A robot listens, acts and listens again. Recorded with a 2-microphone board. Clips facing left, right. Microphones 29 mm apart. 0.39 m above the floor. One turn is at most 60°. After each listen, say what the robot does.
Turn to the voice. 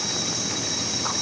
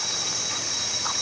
Keep listening.
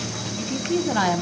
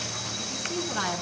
Turn 35° left.
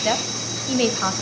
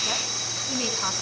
Turn 60° left.
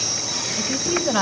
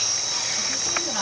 Turn 35° left.
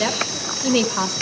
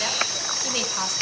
Turn 20° left.
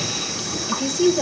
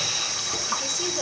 Found it: a woman speaking, straight ahead, 1 to 2 m away.